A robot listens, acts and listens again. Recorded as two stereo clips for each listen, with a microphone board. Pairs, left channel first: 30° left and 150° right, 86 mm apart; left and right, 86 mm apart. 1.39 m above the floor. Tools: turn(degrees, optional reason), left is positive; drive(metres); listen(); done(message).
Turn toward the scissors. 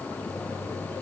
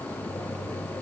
listen()
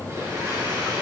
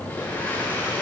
listen()
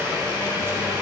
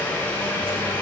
done("I can't make out scissors, only a blender.")